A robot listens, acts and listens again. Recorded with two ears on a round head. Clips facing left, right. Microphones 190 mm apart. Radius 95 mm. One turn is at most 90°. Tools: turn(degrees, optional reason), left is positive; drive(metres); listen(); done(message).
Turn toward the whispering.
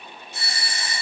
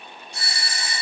listen()
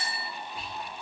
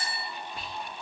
turn(degrees=-55, reason="The whispering: about 55° right or 125° right.")
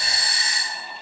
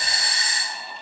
listen()
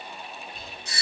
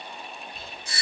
done("Found it: whispering, straight ahead.")